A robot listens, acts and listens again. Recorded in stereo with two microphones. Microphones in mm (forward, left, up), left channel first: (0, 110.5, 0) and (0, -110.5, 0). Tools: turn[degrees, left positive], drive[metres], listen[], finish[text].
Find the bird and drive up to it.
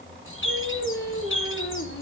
Thought: The bird: about 70° left or 110° left.
Action: turn[70]
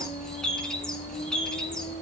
Action: drive[1.0]
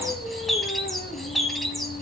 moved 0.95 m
Action: drive[1.0]
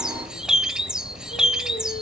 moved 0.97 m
Action: drive[1.0]
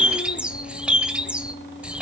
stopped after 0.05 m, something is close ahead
Action: finish[Arrived at the bird, straight ahead.]